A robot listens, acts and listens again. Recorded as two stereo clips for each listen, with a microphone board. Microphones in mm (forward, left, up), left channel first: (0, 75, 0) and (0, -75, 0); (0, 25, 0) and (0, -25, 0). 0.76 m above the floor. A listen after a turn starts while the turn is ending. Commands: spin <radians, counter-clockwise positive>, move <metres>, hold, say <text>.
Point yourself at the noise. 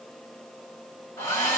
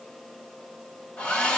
spin 0.35
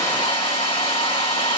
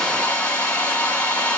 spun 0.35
spin 2.44
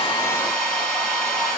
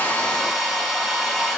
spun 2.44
say Facing the hair dryer.